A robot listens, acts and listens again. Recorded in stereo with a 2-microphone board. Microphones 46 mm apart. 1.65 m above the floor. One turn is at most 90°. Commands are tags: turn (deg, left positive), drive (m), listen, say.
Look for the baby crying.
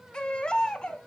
<turn deg="20"/>
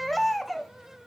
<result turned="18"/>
<say>Facing the baby crying.</say>